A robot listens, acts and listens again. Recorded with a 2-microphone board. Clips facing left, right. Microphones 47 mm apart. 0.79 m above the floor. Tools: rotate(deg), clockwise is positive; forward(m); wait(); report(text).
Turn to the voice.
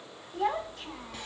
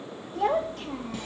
rotate(55)
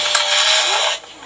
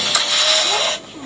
report("Facing the child speaking.")